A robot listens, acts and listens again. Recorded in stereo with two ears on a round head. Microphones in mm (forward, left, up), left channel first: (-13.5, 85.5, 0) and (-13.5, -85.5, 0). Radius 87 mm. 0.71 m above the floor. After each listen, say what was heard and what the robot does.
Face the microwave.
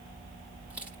Keep listening.
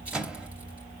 Turn 30° right.
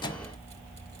So it is at 25° left. Turn 25° left.
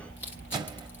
The microwave is now 25° right. Turn 25° right.
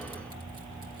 Keep listening.
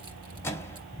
The microwave is now 15° left. Turn 15° left.
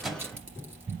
Facing the microwave, under 1 m away.